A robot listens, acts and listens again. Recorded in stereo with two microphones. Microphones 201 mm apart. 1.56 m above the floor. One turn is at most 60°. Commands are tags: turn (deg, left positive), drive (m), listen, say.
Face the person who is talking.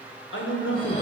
<turn deg="60"/>
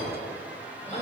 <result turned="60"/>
<turn deg="30"/>
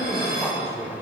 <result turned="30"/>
<say>Found it: a man speaking, straight ahead, 1 to 2 m away.</say>